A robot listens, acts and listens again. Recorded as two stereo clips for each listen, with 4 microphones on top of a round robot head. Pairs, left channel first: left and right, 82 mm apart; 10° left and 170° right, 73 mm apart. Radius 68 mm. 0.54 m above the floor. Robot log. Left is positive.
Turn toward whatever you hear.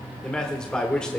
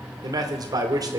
note: The man speaking: 170° left.
cmd yaw +170
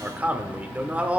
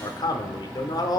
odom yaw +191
note: The man speaking is now 20° right.
cmd yaw -20
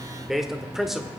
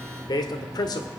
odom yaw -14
end: Facing the man speaking, 1 to 2 m away.